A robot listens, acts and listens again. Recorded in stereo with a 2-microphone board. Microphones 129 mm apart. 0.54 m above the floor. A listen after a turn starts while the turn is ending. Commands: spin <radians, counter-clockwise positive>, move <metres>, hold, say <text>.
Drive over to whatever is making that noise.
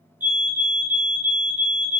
spin -0.52
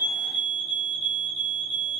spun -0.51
spin -2.44
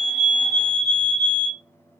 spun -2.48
move 1.0
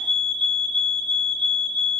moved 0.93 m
move 1.0
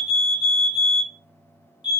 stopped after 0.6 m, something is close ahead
say Arrived at the fire alarm, straight ahead.